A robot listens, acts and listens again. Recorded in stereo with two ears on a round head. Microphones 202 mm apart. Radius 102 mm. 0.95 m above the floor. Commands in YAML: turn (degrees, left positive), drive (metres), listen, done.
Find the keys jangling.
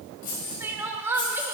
turn: 35
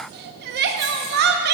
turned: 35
listen: true
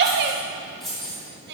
done: "Found it: keys jangling, straight ahead."